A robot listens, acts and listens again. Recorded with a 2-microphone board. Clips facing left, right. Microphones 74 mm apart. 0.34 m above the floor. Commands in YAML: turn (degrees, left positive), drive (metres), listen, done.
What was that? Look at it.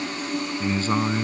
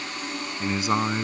turn: -30
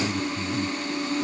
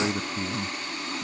turn: -140
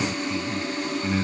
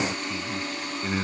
turn: -15
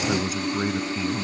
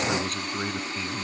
turn: 10
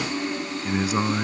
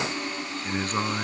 done: "Found it: a man speaking, straight ahead."